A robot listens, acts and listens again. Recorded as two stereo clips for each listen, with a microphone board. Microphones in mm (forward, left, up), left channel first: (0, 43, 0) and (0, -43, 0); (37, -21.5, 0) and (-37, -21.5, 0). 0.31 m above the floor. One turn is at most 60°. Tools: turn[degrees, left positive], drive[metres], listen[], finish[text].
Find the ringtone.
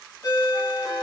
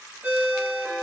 Thought: The ringtone: 125° left.
Action: turn[60]
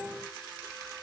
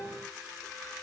Thought: Nothing new. It was at 65° left.
Action: turn[60]
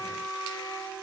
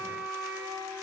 Action: listen[]
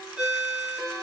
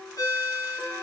Thought: The ringtone is now 10° right.
Action: turn[-10]
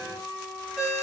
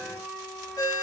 Action: finish[Found it: a ringtone, straight ahead.]